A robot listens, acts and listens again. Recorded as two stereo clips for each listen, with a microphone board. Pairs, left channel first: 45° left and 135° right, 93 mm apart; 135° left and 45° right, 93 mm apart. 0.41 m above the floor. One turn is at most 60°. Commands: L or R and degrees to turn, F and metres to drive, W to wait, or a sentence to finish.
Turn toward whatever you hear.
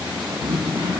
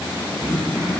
R60
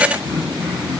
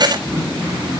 R60
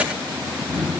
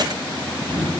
R40
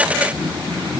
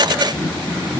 Facing the throat clearing.